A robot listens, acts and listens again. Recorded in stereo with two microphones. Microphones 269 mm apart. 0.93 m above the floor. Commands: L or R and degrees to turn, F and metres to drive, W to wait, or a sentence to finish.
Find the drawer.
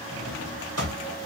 R65
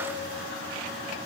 W
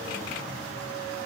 W
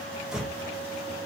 Found it: a drawer, straight ahead, 1 to 2 m away.